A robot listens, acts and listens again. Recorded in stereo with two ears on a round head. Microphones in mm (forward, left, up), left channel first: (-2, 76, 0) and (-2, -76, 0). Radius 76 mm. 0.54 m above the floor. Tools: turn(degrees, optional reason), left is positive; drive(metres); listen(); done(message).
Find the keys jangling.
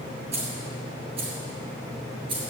turn(degrees=-30, reason="The keys jangling: about 30° right or 150° right.")
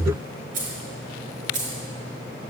turn(degrees=-130, reason="So it is at 130° right.")
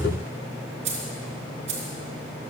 turn(degrees=-40, reason="The keys jangling is now 40° right.")
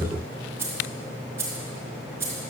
turn(degrees=-15, reason="The keys jangling is now 15° right.")
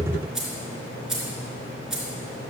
done("Facing the keys jangling.")